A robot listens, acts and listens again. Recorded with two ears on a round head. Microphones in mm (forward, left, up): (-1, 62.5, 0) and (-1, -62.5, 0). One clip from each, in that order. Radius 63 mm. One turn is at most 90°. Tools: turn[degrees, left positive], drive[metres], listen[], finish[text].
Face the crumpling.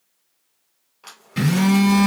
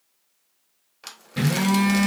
Thought: The crumpling: about 40° right or 140° right.
Action: turn[-40]
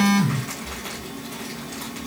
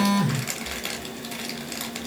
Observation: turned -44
Thought: So it is at 100° right.
Action: turn[-90]
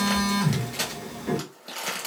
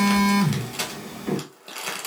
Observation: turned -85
Thought: The crumpling is now 15° right.
Action: turn[-15]
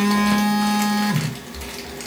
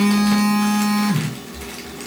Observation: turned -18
Action: listen[]
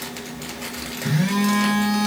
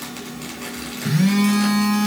Action: listen[]
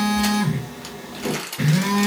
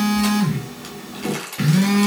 Action: finish[Facing the crumpling, 1 to 2 m away.]